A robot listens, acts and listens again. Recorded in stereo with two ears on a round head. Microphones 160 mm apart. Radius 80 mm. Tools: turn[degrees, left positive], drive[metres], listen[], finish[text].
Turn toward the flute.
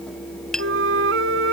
Action: turn[-90]
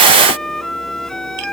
Action: finish[Found it: a flute, straight ahead.]